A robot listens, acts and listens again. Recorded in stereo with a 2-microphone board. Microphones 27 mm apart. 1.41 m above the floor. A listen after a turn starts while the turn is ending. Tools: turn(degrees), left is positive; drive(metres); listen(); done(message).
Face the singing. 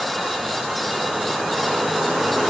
listen()
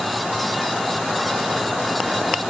listen()
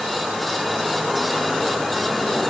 done("I can't make out singing.")